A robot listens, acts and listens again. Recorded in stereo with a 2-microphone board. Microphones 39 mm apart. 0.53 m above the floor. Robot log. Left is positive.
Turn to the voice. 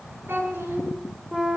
note: The child speaking: about 70° right or 110° right.
cmd yaw -70
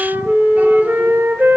cmd idle
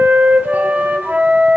cmd idle
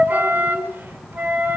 end: I heard a child speaking, but can't make it out now. It was about straight ahead or 40° right.